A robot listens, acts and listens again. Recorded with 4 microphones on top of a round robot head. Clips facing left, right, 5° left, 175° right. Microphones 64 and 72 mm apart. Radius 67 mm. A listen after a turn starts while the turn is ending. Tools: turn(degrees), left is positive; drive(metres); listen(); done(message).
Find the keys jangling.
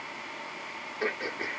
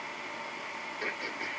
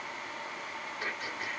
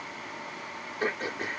listen()
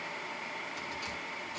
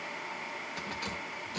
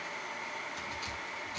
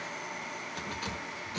turn(degrees=-130)
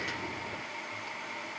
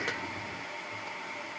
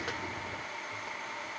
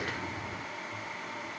listen()
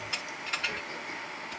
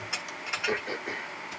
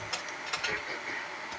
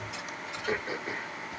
turn(degrees=-15)
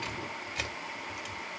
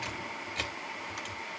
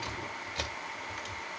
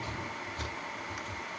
done("Found it: keys jangling, straight ahead.")